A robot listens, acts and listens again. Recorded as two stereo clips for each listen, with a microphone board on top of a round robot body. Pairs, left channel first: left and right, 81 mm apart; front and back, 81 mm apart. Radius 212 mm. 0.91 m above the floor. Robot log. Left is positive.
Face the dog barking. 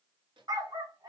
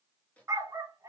note: The dog barking: 120° right.
cmd yaw -120
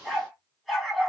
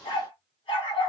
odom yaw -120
end: Facing the dog barking.